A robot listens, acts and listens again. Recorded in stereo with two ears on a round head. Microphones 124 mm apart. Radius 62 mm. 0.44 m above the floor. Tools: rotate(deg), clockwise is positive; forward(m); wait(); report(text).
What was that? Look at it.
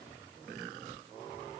wait()
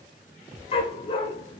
rotate(-40)
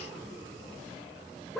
wait()
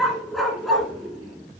report("Facing the dog barking.")